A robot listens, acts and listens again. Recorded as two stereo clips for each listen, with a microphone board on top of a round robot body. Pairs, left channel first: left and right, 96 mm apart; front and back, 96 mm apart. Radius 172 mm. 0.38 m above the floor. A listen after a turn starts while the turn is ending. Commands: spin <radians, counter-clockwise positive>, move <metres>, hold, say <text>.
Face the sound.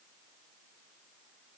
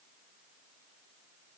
hold
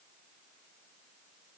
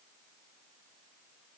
hold
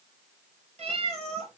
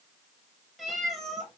spin -1.57
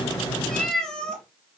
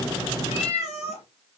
spin 0.17
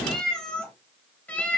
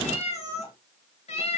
spin 0.26
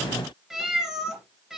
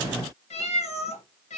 say Found it: a cat meowing, straight ahead, 2 to 4 m away.